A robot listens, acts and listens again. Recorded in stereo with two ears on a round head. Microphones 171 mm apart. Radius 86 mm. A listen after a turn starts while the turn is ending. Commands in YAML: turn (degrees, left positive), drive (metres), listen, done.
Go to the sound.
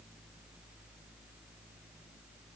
listen: true
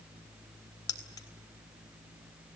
turn: 20
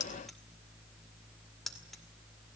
drive: 1.0
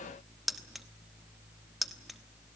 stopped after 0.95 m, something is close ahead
done: "I am next to the keys jangling."